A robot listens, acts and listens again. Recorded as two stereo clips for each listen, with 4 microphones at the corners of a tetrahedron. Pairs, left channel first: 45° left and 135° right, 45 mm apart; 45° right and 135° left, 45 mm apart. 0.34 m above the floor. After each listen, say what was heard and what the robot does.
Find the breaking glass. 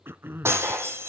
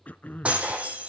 The breaking glass: 165° right. Turn 165° right.
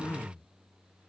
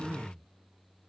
I heard breaking glass from this way, but can't make it out now.